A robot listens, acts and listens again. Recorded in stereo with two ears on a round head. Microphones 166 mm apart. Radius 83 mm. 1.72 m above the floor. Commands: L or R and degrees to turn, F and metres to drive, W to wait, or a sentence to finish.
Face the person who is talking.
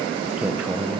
R30
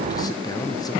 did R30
L25
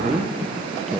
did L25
W
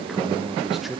Found it: a man speaking, straight ahead, 1 to 2 m away.